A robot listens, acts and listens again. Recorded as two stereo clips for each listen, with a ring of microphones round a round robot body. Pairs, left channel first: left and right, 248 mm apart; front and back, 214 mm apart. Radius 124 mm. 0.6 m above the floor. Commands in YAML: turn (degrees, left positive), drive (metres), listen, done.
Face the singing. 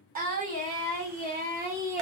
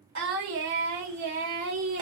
turn: -140
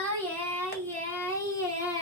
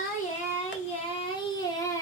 turn: 45
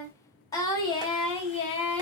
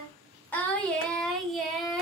turn: 90
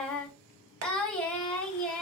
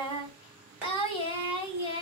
turn: 10
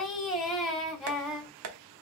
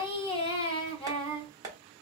done: "Facing the singing."